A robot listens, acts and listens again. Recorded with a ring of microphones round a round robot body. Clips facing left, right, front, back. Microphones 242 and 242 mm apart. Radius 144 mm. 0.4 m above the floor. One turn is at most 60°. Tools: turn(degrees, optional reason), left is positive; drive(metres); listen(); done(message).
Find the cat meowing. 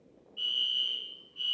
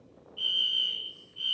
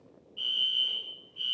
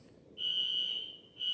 listen()
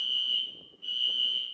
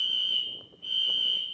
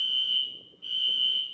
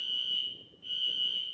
listen()
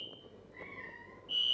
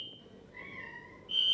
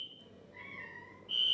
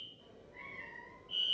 turn(degrees=-40, reason="The cat meowing: 40° right.")
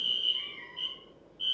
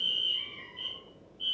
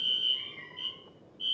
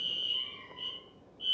turn(degrees=25, reason="The cat meowing is now 25° left.")
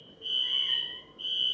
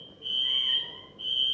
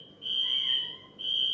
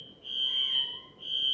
listen()
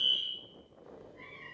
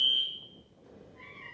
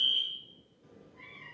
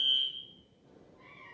done("Facing the cat meowing, 2 to 4 m away.")